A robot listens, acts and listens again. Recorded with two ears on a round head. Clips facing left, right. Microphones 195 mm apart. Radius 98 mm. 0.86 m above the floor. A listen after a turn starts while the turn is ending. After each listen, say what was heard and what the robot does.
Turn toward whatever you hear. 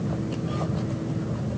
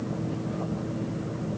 Keep listening.
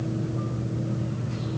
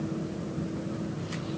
Keep listening.
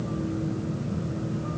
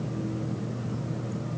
I can't make out anything.